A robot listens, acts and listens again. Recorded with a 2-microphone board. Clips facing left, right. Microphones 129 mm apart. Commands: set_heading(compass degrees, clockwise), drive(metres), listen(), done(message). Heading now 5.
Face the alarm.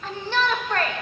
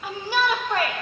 listen()
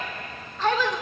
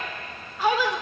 listen()
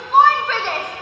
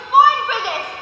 done("I can't make out an alarm to turn to.")